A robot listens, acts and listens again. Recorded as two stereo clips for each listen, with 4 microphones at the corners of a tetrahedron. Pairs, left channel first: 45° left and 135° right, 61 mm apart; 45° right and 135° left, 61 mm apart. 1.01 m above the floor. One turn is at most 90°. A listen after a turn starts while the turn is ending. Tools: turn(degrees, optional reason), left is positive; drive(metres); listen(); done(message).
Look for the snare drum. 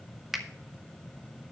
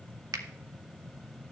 listen()
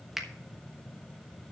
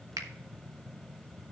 listen()
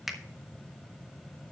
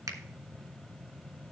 done("I can't make out a snare drum to turn to.")